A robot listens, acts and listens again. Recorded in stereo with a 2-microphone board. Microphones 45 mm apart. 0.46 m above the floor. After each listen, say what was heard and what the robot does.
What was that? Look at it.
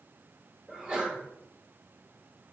The sneeze: about 20° right or 160° right. Turn 20° right.
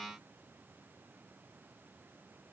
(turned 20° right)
Keep listening.
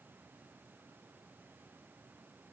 I heard a sneeze, but can't make it out now. It was about straight ahead or 140° right.